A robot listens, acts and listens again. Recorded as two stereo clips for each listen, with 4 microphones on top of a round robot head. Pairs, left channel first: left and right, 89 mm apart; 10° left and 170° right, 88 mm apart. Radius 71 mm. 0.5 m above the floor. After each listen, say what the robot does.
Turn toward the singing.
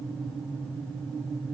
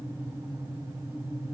Keep listening.
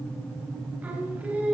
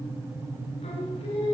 Turn 15° right.
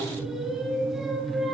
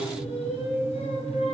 Facing the singing, over 4 m away.